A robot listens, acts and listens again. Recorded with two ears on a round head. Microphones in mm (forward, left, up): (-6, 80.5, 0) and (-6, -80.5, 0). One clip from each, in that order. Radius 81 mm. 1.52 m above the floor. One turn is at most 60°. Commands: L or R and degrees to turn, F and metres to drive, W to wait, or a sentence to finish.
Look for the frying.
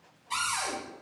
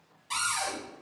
W
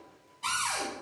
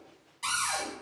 W
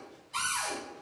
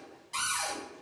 I can't make out frying to turn to.